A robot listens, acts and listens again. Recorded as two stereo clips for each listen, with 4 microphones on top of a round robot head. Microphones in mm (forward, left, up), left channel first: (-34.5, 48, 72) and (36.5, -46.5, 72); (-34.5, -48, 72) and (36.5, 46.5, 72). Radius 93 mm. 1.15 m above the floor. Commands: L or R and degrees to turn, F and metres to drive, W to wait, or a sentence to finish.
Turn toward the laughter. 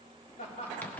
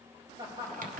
L115
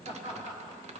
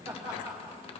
Facing the laughter.